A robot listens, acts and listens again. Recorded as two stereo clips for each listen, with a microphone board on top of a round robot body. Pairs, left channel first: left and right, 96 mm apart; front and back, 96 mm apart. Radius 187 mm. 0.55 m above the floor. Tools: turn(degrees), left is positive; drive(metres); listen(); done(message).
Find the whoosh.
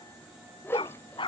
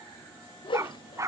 turn(degrees=25)
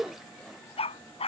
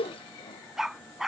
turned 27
done("Found it: a whoosh, straight ahead.")